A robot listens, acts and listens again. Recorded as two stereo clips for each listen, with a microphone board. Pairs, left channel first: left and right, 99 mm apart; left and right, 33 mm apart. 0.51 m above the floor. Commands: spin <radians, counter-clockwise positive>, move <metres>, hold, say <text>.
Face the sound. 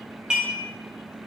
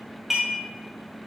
spin -0.52
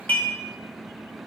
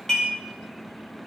spin 0.35
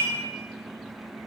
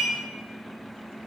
say Found it: dishes clattering, straight ahead.